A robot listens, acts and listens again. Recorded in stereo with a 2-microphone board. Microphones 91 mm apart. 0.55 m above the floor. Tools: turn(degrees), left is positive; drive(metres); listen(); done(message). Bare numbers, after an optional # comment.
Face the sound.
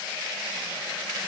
listen()
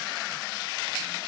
listen()
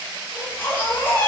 # The baby crying: about 25° left or 155° left.
turn(25)
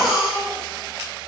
done("Found it: a baby crying, straight ahead, 2 to 4 m away.")